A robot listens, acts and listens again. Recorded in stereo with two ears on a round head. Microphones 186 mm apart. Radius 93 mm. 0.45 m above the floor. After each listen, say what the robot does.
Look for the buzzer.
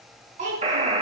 Turn 30° right.
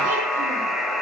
Facing the buzzer.